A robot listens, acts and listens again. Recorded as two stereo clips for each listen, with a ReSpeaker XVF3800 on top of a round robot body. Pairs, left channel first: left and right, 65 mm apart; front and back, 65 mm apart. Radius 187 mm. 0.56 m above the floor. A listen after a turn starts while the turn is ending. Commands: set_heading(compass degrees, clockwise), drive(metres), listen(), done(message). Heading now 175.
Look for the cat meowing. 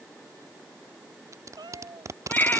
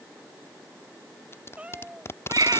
set_heading(285)
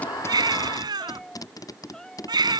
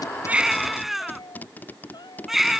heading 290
set_heading(280)
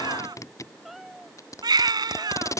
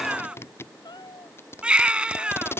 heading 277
done("Facing the cat meowing.")